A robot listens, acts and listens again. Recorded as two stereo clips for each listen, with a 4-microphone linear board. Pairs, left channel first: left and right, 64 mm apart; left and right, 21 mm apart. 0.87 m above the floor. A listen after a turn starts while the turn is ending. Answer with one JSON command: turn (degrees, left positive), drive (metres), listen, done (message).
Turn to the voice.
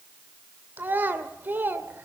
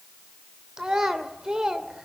{"turn": -30}
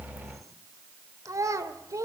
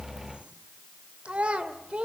{"turn": -120}
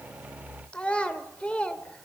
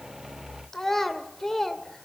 {"turn": 20}
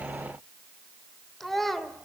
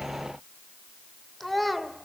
{"done": "Facing the child speaking."}